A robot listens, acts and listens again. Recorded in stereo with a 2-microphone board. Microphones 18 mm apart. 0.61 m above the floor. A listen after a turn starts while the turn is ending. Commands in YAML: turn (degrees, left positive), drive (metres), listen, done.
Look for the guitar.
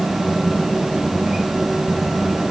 listen: true
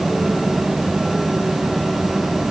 listen: true
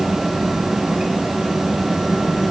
done: "I can't make out a guitar."